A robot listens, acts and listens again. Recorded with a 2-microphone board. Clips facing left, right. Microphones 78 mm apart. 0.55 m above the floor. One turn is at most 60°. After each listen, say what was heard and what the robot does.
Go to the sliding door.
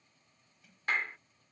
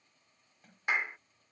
The sliding door: about 40° right or 140° right. Turn 40° right.
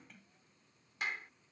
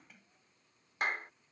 Drive 1.0 m forward.
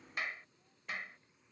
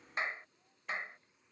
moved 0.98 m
Keep listening.
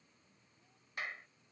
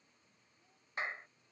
Keep listening.
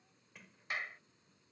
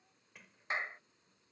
Drive 1.0 m forward.
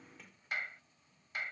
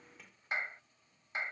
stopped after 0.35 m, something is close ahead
Arrived at the sliding door, straight ahead.